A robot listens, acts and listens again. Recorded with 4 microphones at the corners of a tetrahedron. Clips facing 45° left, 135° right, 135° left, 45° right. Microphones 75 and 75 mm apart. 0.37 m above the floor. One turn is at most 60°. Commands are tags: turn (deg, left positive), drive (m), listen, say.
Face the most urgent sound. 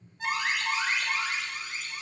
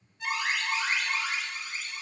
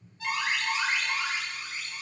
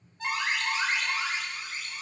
<turn deg="10"/>
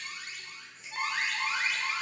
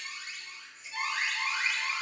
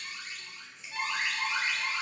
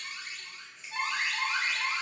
<say>Found it: an alarm, straight ahead.</say>